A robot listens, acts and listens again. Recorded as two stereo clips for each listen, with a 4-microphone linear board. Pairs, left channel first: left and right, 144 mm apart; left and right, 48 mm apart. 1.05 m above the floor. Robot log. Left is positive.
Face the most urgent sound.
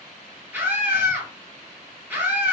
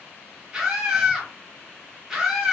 cmd yaw -30
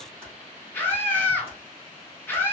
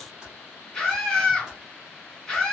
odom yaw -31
note: So it is at 15° left.
cmd yaw +15
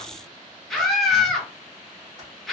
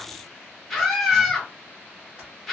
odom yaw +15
end: Facing the scream.